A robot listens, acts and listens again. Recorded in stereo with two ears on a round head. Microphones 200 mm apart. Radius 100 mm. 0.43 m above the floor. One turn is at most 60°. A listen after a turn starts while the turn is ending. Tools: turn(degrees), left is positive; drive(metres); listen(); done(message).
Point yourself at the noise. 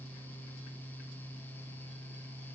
listen()
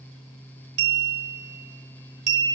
turn(degrees=-50)
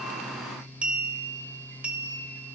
done("Facing the clink, under 1 m away.")